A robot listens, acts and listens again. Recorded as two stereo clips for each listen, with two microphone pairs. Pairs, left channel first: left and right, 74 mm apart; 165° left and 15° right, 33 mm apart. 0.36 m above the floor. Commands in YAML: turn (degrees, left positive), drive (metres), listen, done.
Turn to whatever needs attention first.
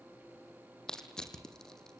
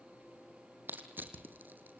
listen: true
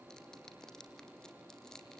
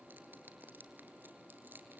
listen: true
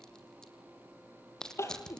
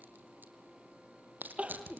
turn: 35
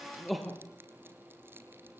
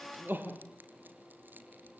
done: "Facing the crying, 2 to 4 m away."